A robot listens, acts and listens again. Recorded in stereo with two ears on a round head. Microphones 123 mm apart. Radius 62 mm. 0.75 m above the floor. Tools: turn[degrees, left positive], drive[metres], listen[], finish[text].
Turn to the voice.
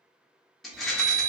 Action: listen[]
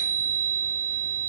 Action: listen[]
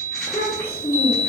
Action: turn[30]
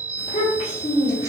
Thought: So it is at 135° left.
Action: turn[135]
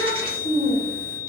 Thought: The child speaking is now 40° left.
Action: turn[40]
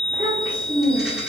Thought: The child speaking is now 10° right.
Action: turn[-10]
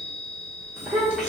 Action: finish[Facing the child speaking.]